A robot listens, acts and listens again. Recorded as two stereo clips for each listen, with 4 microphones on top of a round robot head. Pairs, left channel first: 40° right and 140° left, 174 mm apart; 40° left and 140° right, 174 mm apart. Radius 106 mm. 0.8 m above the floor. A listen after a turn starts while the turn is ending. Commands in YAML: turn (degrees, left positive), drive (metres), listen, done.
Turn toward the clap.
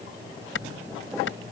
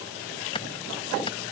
turn: -25
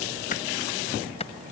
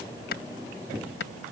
turn: 15
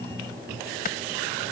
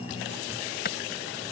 done: "Found it: a clap, straight ahead."